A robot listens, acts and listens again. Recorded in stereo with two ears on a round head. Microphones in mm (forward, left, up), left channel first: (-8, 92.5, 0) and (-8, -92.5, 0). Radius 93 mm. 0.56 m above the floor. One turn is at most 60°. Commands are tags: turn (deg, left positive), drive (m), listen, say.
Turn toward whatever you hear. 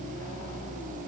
<listen/>
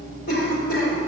<turn deg="50"/>
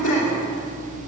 <turn deg="60"/>
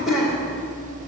<say>Facing the cough.</say>